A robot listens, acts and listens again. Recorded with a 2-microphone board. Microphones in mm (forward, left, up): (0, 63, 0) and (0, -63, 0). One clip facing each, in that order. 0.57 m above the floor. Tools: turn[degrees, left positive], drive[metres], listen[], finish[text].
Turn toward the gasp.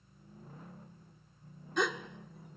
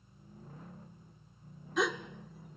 Action: turn[30]
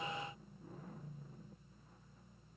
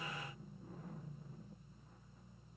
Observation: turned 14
Action: listen[]
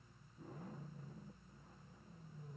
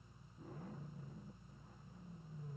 Action: finish[I heard a gasp, but can't make it out now. It was about 15° right or 170° left.]